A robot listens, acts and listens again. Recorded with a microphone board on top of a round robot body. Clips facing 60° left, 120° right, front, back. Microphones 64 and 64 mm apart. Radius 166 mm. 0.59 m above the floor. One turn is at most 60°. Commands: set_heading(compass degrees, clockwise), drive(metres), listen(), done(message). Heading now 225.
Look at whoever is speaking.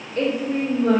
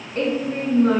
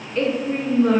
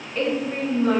set_heading(285)
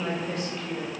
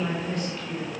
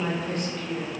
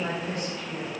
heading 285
set_heading(310)
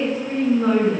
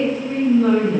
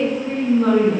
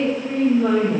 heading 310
done("Found it: a woman speaking, straight ahead.")